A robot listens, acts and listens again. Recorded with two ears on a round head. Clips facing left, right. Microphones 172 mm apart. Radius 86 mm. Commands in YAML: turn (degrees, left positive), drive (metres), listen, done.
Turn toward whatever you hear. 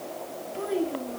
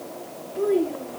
turn: 40
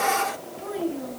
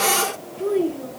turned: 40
done: "Found it: a child speaking, straight ahead."